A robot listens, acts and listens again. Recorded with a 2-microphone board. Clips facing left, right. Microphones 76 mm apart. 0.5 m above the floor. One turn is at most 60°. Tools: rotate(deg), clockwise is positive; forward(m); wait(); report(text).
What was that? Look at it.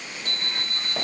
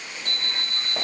rotate(-30)
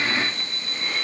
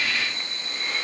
report("Facing the alarm clock, 2 to 4 m away.")